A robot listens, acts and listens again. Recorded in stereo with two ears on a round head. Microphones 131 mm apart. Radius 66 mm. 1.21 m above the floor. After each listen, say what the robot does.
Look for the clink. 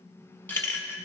Turn 15° left.
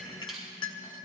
Turn 150° left.
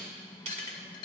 Turn 35° left.
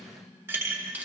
Turn 15° right.
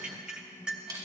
Facing the clink.